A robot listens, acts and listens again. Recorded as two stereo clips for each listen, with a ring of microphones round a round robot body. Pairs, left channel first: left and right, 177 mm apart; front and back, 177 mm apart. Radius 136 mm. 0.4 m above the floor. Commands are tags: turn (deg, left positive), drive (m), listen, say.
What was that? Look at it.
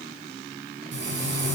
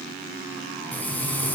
<turn deg="-80"/>
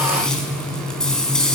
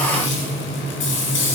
<say>Found it: frying, straight ahead, 2 to 4 m away.</say>